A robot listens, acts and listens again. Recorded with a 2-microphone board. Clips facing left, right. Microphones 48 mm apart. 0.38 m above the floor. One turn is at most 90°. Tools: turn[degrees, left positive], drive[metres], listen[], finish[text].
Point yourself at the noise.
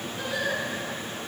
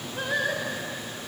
Thought: The singing: about 45° right or 135° right.
Action: turn[-45]
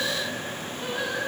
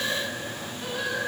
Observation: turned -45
Thought: So it is at 15° left.
Action: turn[15]
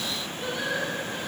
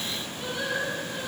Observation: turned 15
Action: finish[Found it: singing, straight ahead.]